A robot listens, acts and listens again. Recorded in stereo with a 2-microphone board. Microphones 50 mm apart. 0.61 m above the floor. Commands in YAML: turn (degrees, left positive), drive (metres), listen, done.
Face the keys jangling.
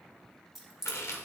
turn: -30
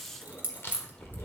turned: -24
turn: -135
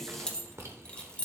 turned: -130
turn: 30
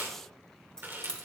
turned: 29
turn: 20
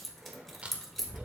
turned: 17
done: "Found it: keys jangling, straight ahead."